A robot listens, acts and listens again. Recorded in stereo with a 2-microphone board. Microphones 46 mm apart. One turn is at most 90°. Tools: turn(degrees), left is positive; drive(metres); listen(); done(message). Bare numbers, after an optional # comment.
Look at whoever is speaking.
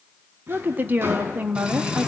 # The woman speaking: about 40° right or 140° right.
turn(-40)
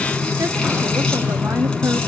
listen()
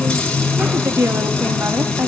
# So it is at 95° right.
turn(-90)
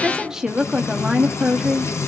# The woman speaking is now 15° right.
turn(-15)
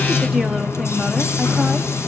listen()
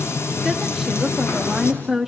# The woman speaking is now 10° right.
turn(-10)
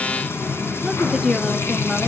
done("Found it: a woman speaking, straight ahead, 1 to 2 m away.")